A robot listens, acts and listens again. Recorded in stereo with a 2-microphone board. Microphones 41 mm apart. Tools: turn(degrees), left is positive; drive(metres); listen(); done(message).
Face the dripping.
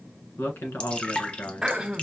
turn(degrees=30)
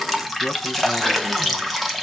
done("Facing the dripping.")